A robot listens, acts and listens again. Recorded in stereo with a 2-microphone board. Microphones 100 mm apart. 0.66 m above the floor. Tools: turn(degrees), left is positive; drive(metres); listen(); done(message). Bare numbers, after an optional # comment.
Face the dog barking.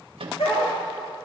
turn(90)
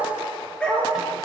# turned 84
# So it is at 10° left.
turn(10)
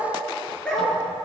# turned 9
# The dog barking is now 10° left.
turn(10)
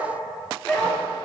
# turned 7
# The dog barking is now 15° left.
turn(15)
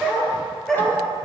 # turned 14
done("Facing the dog barking.")